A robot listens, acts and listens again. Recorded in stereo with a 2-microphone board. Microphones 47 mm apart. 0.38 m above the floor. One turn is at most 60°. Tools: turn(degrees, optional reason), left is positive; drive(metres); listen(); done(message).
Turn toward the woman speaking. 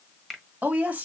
turn(degrees=-30, reason="The woman speaking: about 30° right or 150° right.")
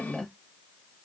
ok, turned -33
done("Found it: a woman speaking, straight ahead, 1 to 2 m away.")